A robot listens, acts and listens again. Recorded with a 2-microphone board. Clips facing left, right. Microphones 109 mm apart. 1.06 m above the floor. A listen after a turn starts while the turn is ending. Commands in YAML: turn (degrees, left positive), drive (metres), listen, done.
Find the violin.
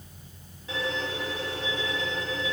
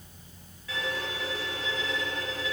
turn: 25
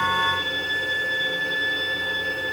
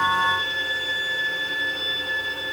turn: 130
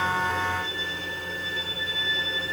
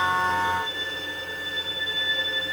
turn: -15
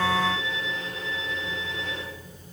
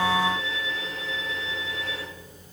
done: "Facing the violin, 2 to 4 m away."